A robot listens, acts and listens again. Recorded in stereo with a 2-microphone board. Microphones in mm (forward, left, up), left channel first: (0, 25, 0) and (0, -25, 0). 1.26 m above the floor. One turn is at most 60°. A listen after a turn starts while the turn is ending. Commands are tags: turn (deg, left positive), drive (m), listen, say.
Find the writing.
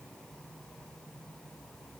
<listen/>
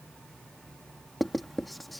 <turn deg="30"/>
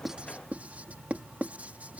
<turn deg="-30"/>
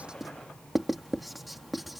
<say>Found it: writing, straight ahead.</say>